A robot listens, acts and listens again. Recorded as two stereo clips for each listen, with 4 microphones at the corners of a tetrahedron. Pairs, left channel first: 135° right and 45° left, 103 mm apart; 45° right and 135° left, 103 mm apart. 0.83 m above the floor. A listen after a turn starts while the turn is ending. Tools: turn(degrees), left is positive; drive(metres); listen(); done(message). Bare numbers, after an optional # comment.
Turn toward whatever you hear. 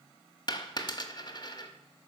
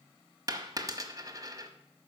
# The dropped coin: 175° right.
turn(-175)
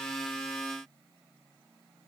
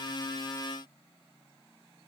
done("I heard a dropped coin from this way, but can't make it out now.")